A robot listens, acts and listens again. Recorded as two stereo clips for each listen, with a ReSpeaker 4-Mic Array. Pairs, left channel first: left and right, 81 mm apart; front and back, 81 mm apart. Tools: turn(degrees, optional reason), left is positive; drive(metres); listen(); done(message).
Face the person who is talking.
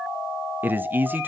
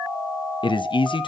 turn(degrees=-20, reason="The man speaking: 20° right.")
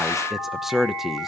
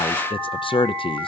done("Facing the man speaking, under 1 m away.")